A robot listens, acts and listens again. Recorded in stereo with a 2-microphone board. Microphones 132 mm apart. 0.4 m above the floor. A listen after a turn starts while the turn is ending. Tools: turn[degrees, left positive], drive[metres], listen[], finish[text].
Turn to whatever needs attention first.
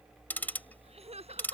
Thought: The crying: about 55° right or 125° right.
Action: turn[-55]
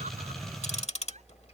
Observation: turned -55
Action: listen[]
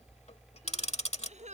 Thought: So it is at 70° right.
Action: turn[-70]
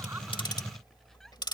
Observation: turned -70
Action: listen[]
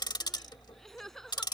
Action: finish[Facing the crying.]